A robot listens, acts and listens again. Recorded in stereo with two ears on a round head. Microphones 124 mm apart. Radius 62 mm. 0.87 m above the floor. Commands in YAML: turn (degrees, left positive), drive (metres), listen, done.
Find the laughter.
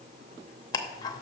listen: true
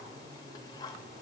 listen: true
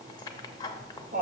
turn: -65
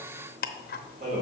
turn: -55
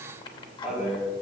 done: "Found it: laughter, straight ahead, over 4 m away."